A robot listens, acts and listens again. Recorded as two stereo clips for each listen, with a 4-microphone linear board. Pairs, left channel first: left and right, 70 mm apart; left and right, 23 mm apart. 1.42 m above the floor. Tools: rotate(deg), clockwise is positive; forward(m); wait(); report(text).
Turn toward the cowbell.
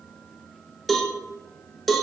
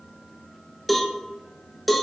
rotate(-30)
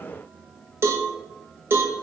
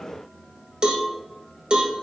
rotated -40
rotate(35)
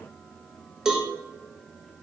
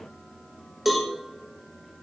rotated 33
report("Facing the cowbell.")